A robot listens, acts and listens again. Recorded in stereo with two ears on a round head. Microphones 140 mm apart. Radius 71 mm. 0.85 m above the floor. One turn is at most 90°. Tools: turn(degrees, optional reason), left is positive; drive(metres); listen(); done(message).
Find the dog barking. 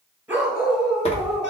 turn(degrees=30)
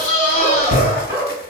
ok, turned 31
turn(degrees=-20, reason="So it is at 20° right.")
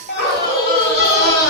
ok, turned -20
done("Found it: a dog barking, straight ahead.")